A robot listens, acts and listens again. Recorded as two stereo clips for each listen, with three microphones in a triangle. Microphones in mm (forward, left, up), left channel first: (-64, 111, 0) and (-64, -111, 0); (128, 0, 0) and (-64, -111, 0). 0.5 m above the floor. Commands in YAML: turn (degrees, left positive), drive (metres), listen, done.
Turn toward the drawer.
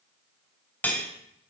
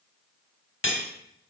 listen: true
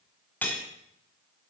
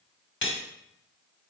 listen: true
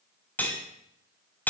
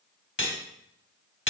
done: "I can't make out a drawer, only cutlery clinking."